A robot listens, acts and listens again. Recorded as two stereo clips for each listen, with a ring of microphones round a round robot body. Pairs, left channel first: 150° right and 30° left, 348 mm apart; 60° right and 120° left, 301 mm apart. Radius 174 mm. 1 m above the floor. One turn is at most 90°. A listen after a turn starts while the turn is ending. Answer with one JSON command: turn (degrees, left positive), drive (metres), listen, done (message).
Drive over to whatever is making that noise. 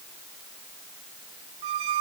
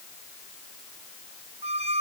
{"turn": 50}
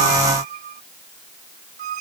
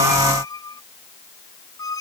{"turn": 20}
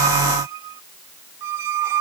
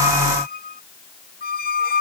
{"drive": 1.0}
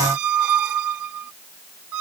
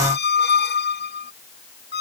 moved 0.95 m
{"drive": 1.0}
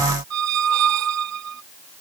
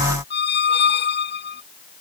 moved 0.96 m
{"turn": -10}
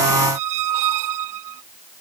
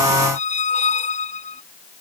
{"drive": 1.0}
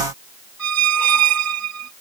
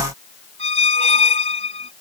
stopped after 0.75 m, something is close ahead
{"done": "Arrived at the squeak, straight ahead."}